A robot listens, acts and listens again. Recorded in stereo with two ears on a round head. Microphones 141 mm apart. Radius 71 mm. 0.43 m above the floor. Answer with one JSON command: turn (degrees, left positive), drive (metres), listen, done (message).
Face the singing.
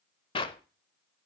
{"listen": true}
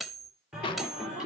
{"turn": -30}
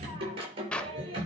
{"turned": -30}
{"turn": -145}
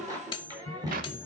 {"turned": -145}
{"turn": -25}
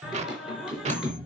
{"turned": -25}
{"done": "Found it: singing, straight ahead, over 4 m away."}